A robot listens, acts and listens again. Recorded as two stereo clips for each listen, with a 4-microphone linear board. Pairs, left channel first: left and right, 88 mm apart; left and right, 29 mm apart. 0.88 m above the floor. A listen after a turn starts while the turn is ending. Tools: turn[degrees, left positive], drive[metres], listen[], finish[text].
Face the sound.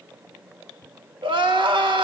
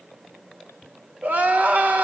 Thought: The crying: about 60° right or 120° right.
Action: turn[-60]
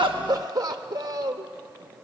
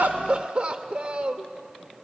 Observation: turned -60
Thought: So it is at 50° right.
Action: turn[-50]
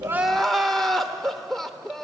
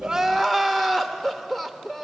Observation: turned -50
Action: finish[Found it: crying, straight ahead, under 1 m away.]